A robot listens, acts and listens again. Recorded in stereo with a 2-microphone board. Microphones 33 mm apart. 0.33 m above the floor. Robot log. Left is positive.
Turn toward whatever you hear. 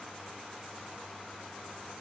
cmd idle
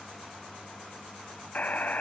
note: The buzzer: about 55° left or 125° left.
cmd yaw +55
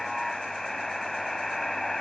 note: So it is at 10° left.
cmd yaw +10
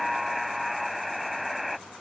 end: Found it: a buzzer, straight ahead.